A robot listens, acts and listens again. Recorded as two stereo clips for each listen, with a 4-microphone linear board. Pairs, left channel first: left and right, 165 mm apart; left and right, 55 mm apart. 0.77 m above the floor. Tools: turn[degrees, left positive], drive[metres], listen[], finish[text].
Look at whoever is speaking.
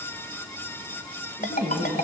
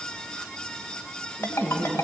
Thought: The woman speaking: about 20° left or 160° left.
Action: turn[20]
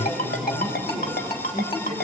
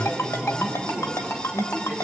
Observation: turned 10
Thought: The woman speaking: about 35° left or 145° left.
Action: turn[35]
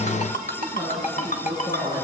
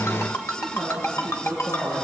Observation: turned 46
Thought: So it is at 100° left.
Action: turn[100]
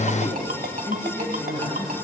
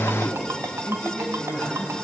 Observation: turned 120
Thought: The woman speaking is now 20° right.
Action: turn[-20]
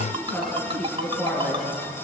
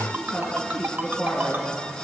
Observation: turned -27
Action: finish[Found it: a woman speaking, straight ahead, over 4 m away.]